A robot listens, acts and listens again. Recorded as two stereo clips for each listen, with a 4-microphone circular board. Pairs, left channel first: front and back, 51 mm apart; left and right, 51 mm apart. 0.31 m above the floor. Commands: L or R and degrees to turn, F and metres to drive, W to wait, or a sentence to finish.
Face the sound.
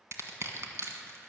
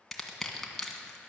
L175
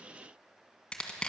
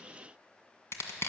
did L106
L70
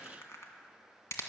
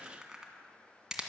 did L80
R15
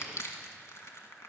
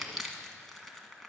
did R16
Facing the crushing, 1 to 2 m away.